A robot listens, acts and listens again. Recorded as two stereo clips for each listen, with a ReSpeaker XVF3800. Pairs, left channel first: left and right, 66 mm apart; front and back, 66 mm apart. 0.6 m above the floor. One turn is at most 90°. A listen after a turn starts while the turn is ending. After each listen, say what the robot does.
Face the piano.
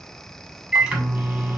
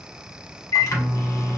Keep listening.
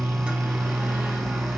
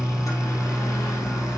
Keep listening.
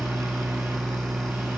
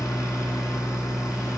I can't make out a piano to turn to.